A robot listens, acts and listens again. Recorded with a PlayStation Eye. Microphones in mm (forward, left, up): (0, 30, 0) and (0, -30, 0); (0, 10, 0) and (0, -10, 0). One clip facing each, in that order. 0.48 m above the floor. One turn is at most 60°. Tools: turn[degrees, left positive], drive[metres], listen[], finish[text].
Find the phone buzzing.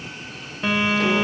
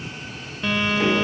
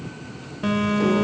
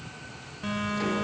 Thought: The phone buzzing: about 20° left or 160° left.
Action: turn[20]
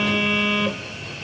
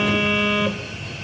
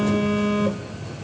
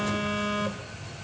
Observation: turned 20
Action: finish[Facing the phone buzzing.]